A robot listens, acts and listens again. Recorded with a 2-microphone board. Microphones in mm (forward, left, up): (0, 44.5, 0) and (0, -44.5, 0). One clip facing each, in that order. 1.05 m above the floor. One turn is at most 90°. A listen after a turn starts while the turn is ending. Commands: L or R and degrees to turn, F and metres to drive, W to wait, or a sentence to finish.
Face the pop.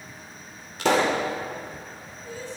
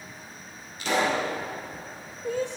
L90
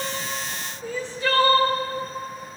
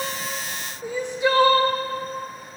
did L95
I heard a pop from this way, but can't make it out now.